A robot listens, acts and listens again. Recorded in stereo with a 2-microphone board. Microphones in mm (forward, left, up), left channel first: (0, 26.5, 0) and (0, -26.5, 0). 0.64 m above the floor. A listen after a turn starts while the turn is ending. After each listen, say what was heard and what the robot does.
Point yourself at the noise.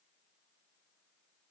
Keep listening.
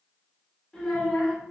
The child speaking: about 20° left or 160° left. Turn 20° left.
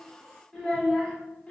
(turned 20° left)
The child speaking: about 25° left or 155° left. Turn 25° left.
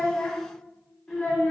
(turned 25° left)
The child speaking: about 20° left or 160° left. Turn 20° left.
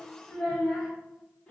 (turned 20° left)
The child speaking: about 15° left or 165° left. Turn 15° left.
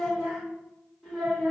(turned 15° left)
Turn 30° left.
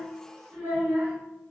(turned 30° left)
So it is at 30° right. Turn 30° right.
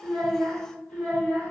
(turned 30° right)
The child speaking is now 10° left. Turn 10° left.
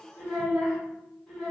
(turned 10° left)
Facing the child speaking, 1 to 2 m away.